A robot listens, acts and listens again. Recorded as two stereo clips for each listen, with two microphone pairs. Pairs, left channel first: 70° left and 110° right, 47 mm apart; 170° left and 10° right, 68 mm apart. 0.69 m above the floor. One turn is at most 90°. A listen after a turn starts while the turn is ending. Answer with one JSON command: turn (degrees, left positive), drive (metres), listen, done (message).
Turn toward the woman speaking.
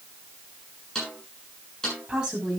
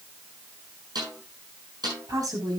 {"turn": -35}
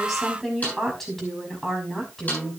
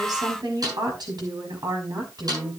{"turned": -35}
{"turn": -10}
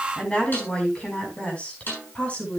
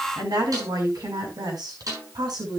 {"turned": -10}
{"turn": 10}
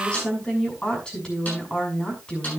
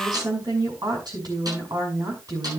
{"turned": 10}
{"done": "Facing the woman speaking, over 4 m away."}